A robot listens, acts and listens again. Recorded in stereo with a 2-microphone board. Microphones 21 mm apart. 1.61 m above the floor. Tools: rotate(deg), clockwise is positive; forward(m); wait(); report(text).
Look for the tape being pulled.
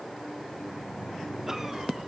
wait()
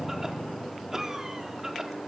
wait()
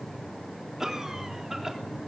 report("I can't make out tape being pulled to turn to.")